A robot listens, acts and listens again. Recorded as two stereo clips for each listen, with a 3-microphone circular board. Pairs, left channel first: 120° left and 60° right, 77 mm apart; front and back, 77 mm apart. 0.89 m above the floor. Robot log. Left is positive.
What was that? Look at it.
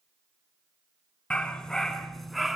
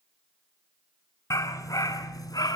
note: The dog barking: 25° left.
cmd yaw +25
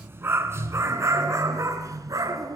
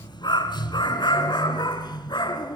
note: The dog barking is now 20° right.
cmd yaw -20
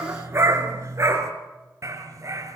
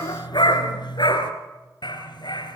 note: The dog barking is now 10° right.
cmd yaw -10
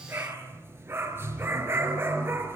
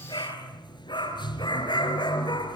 end: Facing the dog barking.